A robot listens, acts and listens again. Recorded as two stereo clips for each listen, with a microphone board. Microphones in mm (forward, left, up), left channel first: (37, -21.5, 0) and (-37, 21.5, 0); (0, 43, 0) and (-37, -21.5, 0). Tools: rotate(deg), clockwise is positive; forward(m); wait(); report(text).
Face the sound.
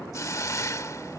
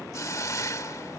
rotate(-20)
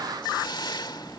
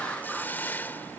report("Facing the hiss.")